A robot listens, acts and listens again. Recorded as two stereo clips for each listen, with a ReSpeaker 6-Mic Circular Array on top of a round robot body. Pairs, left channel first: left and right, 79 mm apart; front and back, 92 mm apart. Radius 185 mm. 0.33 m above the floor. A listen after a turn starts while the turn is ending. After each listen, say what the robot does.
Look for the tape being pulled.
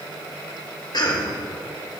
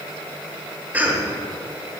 Keep listening.
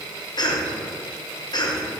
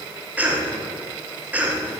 Keep listening.
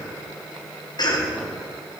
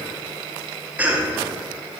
I can't make out tape being pulled, only a cough.